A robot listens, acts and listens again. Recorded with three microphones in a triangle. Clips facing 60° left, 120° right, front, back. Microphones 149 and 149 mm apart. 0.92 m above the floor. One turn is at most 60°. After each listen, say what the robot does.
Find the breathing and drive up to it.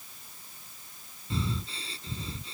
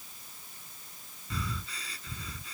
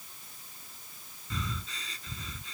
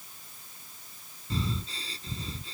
Turn 60° left.
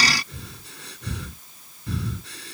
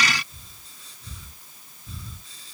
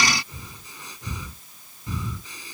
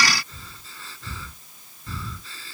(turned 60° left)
Turn 60° left.
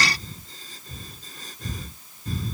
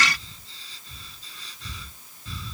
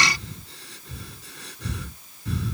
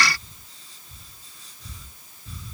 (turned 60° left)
Turn 15° left.
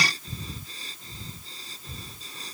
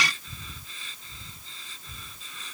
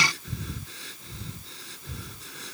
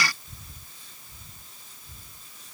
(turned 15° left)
Drive 1.0 m forward.
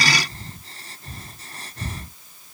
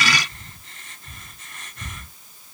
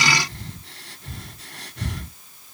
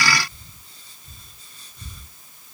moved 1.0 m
Drive 1.0 m forward.
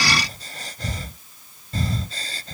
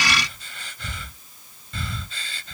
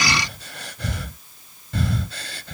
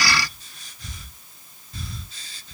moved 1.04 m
Turn 10° left.
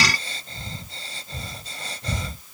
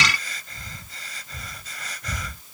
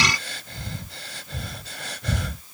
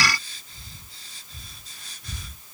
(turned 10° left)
Drive 1.0 m forward.
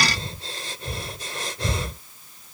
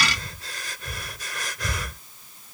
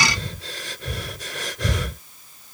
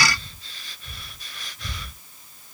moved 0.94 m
Drive 1.0 m forward.
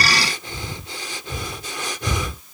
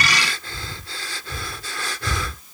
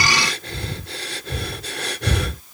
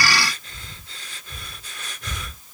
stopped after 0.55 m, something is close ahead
Turn 10° right.
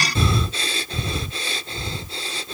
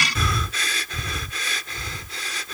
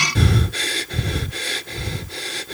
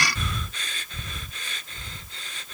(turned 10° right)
Arrived at the breathing, straight ahead.